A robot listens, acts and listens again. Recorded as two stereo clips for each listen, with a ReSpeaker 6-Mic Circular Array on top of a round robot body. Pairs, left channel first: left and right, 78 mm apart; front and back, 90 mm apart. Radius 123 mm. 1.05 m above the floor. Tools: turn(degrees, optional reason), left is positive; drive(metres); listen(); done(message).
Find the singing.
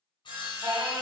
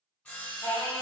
turn(degrees=-50, reason="The singing: 50° right.")
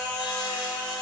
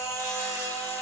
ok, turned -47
turn(degrees=-20, reason="The singing is now 20° right.")
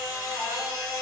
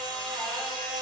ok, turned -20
turn(degrees=-10, reason="The singing is now 10° right.")
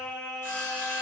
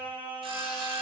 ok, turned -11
turn(degrees=-15, reason="The singing is now 15° right.")
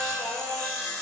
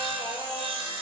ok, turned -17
turn(degrees=-10, reason="The singing is now 10° right.")
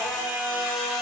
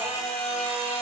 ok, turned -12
turn(degrees=-10, reason="The singing is now 10° right.")
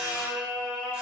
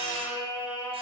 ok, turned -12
done("Facing the singing, 2 to 4 m away.")